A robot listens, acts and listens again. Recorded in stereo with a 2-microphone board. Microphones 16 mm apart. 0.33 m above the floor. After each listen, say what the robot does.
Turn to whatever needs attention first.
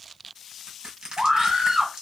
Turn 45° right.
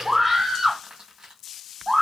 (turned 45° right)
Facing the scream.